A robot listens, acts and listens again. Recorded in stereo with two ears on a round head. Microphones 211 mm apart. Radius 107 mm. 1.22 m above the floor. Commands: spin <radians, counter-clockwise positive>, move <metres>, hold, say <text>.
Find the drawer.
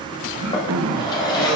spin 0.35
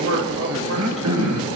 hold
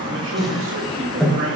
say Found it: a drawer, straight ahead, over 4 m away.